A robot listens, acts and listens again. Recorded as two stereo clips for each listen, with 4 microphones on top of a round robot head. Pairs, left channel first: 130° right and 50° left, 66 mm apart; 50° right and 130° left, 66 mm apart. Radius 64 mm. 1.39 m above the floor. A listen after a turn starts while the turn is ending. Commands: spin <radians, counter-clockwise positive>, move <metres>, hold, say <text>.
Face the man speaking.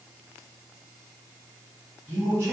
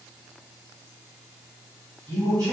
spin 1.66
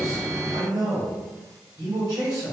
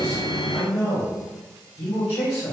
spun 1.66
spin 0.17
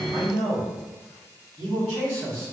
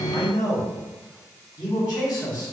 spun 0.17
say Found it: a man speaking, straight ahead.